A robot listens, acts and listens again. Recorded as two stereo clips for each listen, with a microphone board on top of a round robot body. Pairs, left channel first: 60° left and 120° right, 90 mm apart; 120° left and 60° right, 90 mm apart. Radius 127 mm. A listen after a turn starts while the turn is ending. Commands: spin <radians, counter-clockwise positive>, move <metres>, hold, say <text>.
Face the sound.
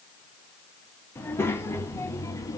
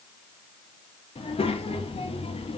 spin 2.01
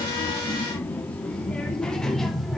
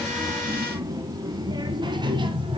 spin -0.44
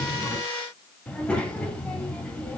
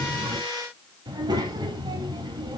spin -0.26
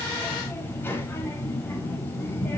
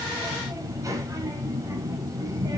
say Facing the child speaking.